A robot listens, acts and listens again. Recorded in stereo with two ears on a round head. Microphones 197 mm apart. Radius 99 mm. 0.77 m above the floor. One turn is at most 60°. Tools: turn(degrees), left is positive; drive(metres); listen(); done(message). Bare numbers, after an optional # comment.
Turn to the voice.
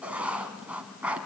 listen()
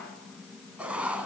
listen()
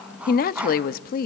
# The woman speaking: about 45° left or 135° left.
turn(45)
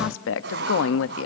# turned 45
# So it is at 85° left.
turn(60)
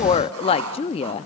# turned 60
# The woman speaking is now 30° left.
turn(30)
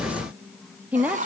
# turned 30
# The woman speaking is now 10° right.
turn(-10)
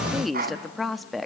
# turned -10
done("Found it: a woman speaking, straight ahead.")